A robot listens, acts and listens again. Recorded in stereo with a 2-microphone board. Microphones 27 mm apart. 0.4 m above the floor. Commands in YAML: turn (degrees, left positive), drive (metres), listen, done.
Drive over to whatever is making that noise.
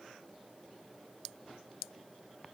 listen: true
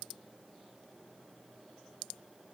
listen: true
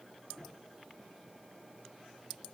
done: "I can't make out anything."